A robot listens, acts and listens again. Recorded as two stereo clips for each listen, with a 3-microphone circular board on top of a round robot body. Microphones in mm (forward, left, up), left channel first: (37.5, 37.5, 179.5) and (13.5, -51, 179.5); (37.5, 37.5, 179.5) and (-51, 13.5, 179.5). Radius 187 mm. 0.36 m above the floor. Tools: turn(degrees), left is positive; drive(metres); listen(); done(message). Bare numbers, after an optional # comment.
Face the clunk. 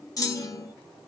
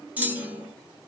# The clunk: 120° left.
turn(120)
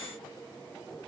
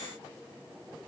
done("I heard a clunk from this way, but can't make it out now.")